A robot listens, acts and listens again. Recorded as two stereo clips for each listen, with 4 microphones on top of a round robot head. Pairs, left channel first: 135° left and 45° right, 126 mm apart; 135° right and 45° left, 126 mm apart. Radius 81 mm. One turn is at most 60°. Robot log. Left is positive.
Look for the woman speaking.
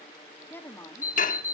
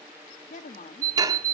note: The woman speaking: 155° right.
cmd yaw -60
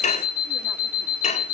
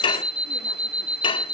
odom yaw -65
note: Nothing new. It was at 90° right.
cmd yaw -60
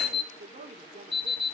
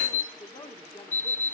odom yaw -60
note: The woman speaking is now 80° right.
cmd yaw -60
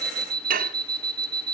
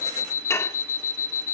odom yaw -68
note: Nothing new. It was at 10° right.
cmd yaw -10
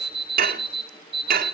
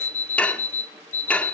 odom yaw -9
cmd idle
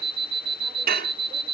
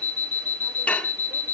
end: I heard a woman speaking from this way, but can't make it out now.